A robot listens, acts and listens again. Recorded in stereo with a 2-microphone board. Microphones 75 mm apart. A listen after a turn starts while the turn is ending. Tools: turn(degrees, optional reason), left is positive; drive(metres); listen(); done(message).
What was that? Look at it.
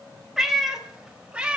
turn(degrees=-30)
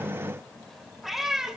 turn(degrees=-30)
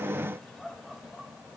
listen()
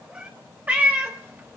turn(degrees=-25, reason="The cat meowing: about 25° right or 155° right.")
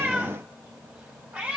turn(degrees=-15, reason="The cat meowing: about 15° right or 165° right.")
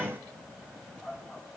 turn(degrees=-30)
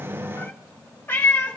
turn(degrees=25, reason="So it is at 25° left.")
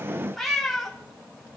done("Facing the cat meowing.")